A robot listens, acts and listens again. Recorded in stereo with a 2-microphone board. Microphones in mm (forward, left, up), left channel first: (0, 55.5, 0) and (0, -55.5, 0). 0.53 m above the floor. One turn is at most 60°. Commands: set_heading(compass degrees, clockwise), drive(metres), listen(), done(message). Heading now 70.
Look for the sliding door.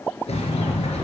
set_heading(10)
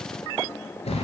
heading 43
set_heading(343)
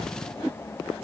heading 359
set_heading(324)
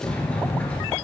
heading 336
set_heading(326)
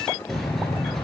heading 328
done("Facing the sliding door, 1 to 2 m away.")